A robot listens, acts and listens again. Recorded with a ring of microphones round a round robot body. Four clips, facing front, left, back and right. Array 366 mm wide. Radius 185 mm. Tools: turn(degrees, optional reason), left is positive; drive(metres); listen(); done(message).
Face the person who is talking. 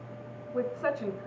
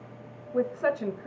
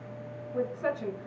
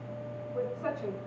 turn(degrees=75, reason="The woman speaking: 75° left.")
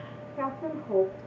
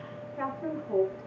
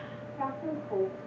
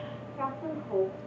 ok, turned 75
turn(degrees=10, reason="The woman speaking is now 10° left.")
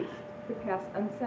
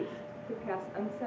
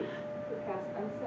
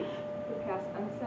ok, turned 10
done("Facing the woman speaking, 2 to 4 m away.")